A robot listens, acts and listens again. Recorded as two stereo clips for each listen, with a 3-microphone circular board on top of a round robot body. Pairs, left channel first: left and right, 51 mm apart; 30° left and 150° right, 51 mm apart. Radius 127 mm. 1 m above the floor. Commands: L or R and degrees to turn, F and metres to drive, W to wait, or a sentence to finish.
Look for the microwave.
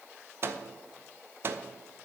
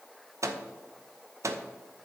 R135
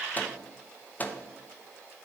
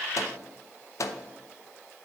L35
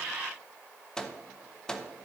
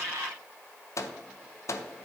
L15
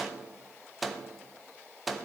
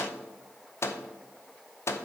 Facing the microwave, under 1 m away.